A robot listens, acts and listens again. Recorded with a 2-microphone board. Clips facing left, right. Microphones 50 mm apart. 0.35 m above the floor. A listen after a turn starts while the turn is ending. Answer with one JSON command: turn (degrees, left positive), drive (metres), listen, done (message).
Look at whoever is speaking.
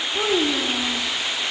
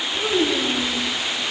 {"turn": 70}
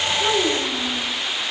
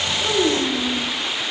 {"done": "Found it: a child speaking, straight ahead."}